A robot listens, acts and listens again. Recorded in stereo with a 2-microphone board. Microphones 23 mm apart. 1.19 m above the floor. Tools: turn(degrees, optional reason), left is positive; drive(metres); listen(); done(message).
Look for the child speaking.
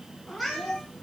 turn(degrees=-30, reason="The child speaking: about 30° right or 150° right.")
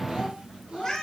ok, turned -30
turn(degrees=-120, reason="So it is at 120° right.")
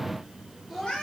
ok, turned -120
done("Found it: a child speaking, straight ahead.")